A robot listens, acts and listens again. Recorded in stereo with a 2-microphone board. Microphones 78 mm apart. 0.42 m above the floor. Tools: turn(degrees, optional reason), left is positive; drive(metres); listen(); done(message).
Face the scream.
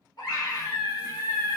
turn(degrees=60, reason="The scream: about 60° left or 120° left.")
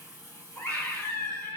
turn(degrees=30, reason="So it is at 30° left.")
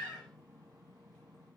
done("Found it: a scream, straight ahead, 1 to 2 m away.")